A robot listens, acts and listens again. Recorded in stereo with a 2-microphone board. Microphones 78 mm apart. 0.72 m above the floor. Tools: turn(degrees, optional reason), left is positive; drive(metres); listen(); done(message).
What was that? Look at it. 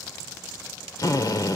turn(degrees=60, reason="The drill: about 60° left or 120° left.")
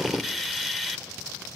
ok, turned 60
done("Facing the drill.")